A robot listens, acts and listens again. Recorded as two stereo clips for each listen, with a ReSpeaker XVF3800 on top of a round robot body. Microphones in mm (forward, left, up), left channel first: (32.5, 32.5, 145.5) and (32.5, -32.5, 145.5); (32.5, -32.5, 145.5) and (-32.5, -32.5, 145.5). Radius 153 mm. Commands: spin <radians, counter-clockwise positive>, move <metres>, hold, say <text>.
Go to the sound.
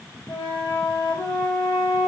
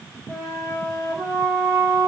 spin 1.75
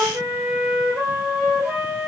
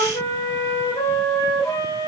spin -0.44
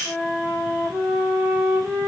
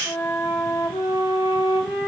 move 1.0
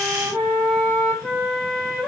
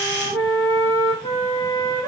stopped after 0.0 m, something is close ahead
say Blocked. The flute is further on, straight ahead.